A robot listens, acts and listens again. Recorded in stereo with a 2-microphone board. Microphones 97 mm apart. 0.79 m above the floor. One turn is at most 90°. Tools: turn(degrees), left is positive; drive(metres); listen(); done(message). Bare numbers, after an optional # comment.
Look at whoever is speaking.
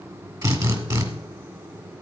listen()
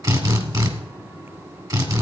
listen()
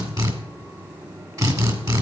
done("I can't make out anyone speaking to turn to.")